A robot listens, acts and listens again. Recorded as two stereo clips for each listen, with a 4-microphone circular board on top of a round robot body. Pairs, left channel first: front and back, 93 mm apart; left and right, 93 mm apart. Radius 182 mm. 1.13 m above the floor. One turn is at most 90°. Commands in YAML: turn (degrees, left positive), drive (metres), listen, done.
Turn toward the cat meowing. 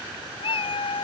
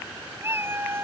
turn: -25
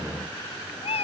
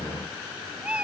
turn: -10
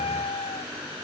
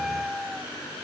done: "Found it: a cat meowing, straight ahead."